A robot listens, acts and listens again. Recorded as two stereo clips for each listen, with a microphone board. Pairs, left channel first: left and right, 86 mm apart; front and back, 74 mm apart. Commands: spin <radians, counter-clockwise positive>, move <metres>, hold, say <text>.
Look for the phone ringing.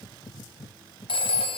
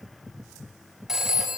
spin 1.66
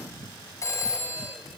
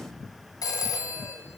spin 0.61
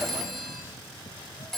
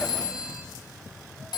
say Facing the phone ringing.